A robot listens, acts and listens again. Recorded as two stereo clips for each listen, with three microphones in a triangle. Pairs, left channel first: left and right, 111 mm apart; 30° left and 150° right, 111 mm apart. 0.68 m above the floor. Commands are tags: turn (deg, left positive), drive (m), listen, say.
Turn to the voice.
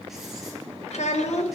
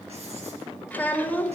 <turn deg="105"/>
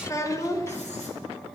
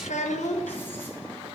<turn deg="25"/>
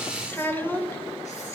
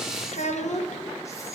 <turn deg="15"/>
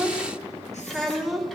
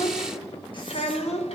<say>Facing the child speaking.</say>